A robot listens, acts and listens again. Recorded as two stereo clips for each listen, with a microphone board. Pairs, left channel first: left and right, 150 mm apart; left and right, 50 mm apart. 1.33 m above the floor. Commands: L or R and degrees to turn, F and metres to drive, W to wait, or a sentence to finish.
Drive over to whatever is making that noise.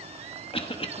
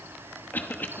L40
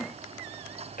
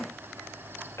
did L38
L100
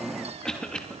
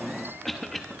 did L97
F1.0
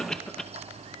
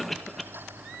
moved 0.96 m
F1.0
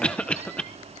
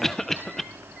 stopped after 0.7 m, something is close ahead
I am next to the cough.